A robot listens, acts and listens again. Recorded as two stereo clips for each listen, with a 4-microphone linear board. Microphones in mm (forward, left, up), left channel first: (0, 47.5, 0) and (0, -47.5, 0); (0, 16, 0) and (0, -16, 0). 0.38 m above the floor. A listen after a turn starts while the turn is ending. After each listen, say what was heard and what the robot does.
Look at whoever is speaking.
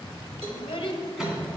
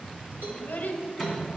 The child speaking: about 60° left or 120° left. Turn 60° left.
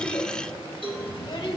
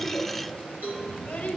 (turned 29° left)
So it is at 50° left. Turn 50° left.
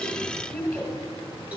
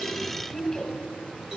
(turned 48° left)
Facing the child speaking, 1 to 2 m away.